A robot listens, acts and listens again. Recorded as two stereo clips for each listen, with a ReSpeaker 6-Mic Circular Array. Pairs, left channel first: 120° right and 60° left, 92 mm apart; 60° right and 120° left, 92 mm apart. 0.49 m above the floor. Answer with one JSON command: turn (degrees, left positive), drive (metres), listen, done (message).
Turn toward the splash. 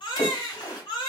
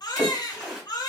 {"turn": -160}
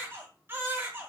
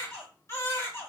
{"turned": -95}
{"turn": -65}
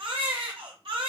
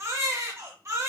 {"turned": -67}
{"done": "Facing where the splash came from. I can't hear it now."}